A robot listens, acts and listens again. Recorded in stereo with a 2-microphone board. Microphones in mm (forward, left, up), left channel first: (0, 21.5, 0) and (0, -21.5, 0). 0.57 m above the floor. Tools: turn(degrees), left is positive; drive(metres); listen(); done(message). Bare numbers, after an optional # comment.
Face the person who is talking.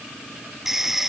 listen()
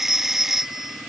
listen()
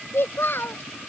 # The child speaking: about 60° left or 120° left.
turn(60)
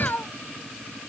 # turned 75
# So it is at 50° left.
turn(50)
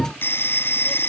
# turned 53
listen()
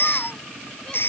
listen()
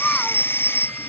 done("I heard a child speaking from this way, but can't make it out now.")